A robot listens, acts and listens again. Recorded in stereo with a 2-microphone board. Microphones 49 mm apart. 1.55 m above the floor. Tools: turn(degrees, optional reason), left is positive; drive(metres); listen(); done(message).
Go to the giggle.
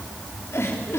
turn(degrees=65, reason="The giggle: about 65° left or 115° left.")
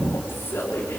turn(degrees=55, reason="So it is at 55° left.")
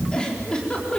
turn(degrees=15, reason="The giggle is now 15° left.")
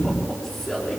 drive(metres=1.0)
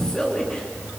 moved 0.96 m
turn(degrees=15, reason="The giggle is now 15° left.")
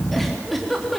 drive(metres=1.0)
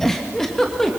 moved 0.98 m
drive(metres=1.0)
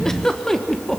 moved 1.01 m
turn(degrees=10, reason="The giggle is now 10° left.")
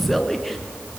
drive(metres=1.0)
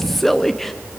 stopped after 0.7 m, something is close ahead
done("I am next to the giggle.")